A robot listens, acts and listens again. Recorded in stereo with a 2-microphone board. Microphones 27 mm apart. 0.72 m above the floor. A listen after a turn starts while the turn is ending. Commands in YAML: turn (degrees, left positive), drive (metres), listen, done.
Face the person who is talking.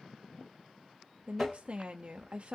turn: -45
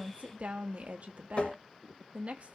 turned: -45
turn: -80
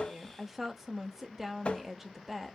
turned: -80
turn: -15
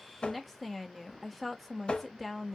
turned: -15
done: "Facing the woman speaking, under 1 m away."